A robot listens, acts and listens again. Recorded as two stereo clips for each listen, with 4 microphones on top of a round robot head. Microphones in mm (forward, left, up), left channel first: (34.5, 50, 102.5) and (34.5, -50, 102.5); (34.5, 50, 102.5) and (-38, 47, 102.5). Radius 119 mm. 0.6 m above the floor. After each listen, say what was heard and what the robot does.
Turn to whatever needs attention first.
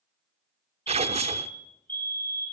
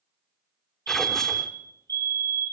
The fire alarm: 160° left. Turn 160° left.
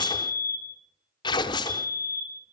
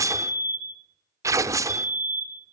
The fire alarm is now 20° left. Turn 20° left.
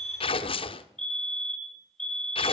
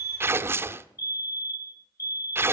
The fire alarm is now 10° left. Turn 10° left.
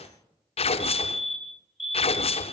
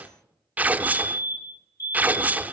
Found it: a fire alarm, straight ahead, 2 to 4 m away.